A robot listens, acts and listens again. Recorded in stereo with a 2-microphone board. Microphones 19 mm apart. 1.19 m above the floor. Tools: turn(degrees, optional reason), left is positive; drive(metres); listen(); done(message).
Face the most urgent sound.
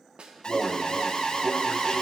turn(degrees=55, reason="The alarm: about 55° left or 125° left.")
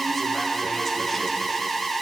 turn(degrees=10, reason="So it is at 10° left.")
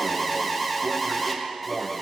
done("Found it: an alarm, straight ahead, 1 to 2 m away.")